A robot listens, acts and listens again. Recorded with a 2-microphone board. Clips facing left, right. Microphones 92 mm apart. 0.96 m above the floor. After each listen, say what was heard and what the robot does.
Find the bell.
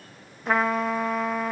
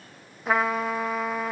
Keep listening.
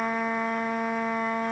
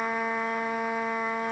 Keep listening.
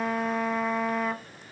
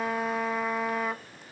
I can't make out a bell, only a trumpet.